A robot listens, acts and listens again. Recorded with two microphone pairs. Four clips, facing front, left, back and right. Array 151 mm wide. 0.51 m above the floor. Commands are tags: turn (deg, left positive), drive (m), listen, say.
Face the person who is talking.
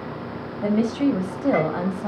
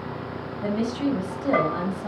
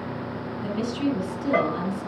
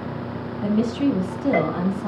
<say>Facing the woman speaking, 2 to 4 m away.</say>